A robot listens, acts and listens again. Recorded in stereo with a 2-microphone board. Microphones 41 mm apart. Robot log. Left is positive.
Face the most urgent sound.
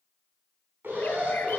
note: The alarm: about 70° right or 110° right.
cmd yaw -70
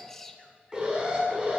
note: So it is at 25° right.
cmd yaw -25
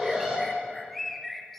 note: The alarm is now 15° right.
cmd yaw -15
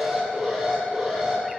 end: Facing the alarm.